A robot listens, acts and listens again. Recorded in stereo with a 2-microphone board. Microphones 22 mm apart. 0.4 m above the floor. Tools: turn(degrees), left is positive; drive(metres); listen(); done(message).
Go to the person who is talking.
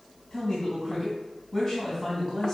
turn(degrees=25)
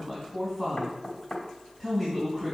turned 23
drive(metres=1.0)
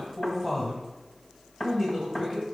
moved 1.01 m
drive(metres=1.0)
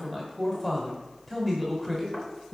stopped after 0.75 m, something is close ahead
turn(degrees=10)
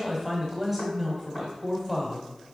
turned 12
done("I am next to the man speaking.")